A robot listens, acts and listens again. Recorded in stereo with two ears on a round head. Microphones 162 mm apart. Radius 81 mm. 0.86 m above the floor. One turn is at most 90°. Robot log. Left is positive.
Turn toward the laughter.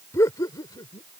note: The laughter: about 20° left or 160° left.
cmd yaw +20
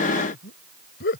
note: So it is at 120° left.
cmd yaw +90
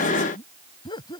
note: The laughter is now 25° left.
cmd yaw +25
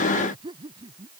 note: The laughter is now 25° right.
cmd yaw -25
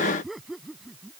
end: Found it: laughter, straight ahead.